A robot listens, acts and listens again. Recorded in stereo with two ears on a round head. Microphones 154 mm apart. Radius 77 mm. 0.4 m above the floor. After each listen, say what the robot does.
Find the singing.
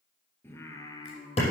Turn 30° left.
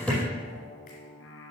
Turn 95° left.
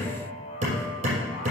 Turn 35° left.
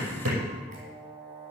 Turn 25° right.
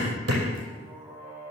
Turn 15° right.
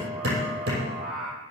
Found it: singing, straight ahead.